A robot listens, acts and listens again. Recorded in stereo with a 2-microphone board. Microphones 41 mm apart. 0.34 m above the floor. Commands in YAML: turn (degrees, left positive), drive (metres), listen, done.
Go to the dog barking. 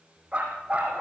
turn: -35
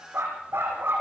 turn: -110
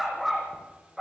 drive: 1.0
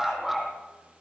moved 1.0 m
drive: 1.0
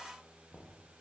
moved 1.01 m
listen: true
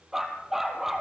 turn: -10
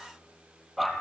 drive: 1.0
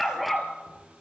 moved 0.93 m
drive: 1.0
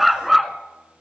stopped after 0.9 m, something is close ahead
done: "Arrived at the dog barking, straight ahead."